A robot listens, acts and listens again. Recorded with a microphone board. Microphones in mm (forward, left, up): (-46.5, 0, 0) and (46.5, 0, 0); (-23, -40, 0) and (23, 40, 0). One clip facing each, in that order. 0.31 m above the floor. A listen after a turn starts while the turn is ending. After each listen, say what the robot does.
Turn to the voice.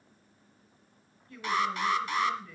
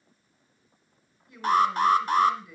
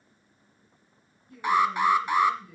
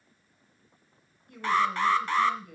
Turn 70° left.
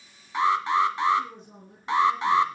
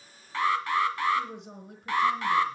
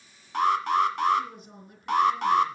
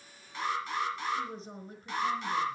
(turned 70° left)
Facing the woman speaking, over 4 m away.